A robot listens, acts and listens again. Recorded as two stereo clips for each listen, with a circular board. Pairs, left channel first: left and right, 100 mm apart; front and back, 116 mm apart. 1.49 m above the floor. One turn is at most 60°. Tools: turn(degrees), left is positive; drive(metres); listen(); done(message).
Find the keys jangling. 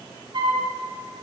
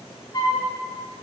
listen()
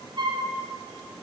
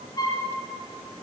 listen()
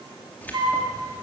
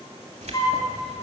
turn(degrees=60)
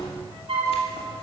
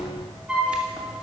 turn(degrees=60)
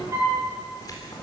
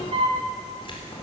turn(degrees=40)
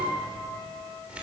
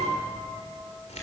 turn(degrees=-10)
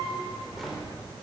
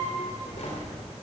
done("Found it: keys jangling, straight ahead.")